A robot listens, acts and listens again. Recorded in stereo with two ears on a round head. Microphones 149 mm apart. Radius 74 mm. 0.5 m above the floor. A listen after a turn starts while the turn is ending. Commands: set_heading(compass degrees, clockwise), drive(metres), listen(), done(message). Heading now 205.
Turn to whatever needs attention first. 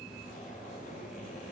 listen()
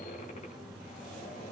listen()
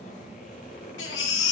set_heading(115)
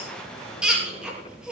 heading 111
done("Found it: a baby crying, straight ahead, over 4 m away.")